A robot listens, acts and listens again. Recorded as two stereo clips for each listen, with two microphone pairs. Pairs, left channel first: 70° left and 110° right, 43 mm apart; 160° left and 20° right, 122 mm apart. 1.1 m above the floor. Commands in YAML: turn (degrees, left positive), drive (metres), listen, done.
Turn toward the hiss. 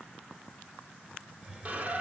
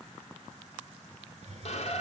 turn: -50
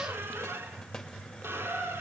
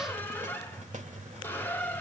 turn: -10
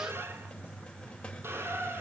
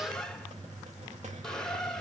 done: "Facing the hiss, 2 to 4 m away."